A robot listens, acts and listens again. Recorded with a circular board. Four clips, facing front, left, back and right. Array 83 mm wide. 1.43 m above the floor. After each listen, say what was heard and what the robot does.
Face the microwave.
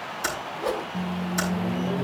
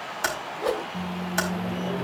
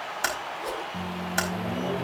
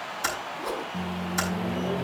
The microwave: 165° right. Turn 165° right.
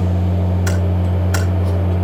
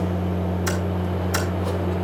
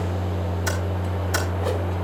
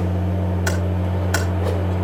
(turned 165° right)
The microwave is now 15° right. Turn 15° right.
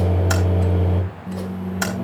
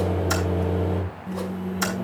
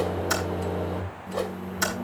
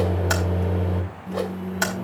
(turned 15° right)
Facing the microwave, over 4 m away.